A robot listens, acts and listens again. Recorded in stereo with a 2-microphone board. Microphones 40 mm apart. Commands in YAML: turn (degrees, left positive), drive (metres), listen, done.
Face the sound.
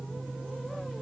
listen: true
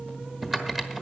turn: -30
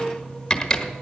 turn: 20
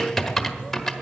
turn: 10
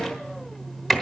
done: "Facing the typing on a keyboard."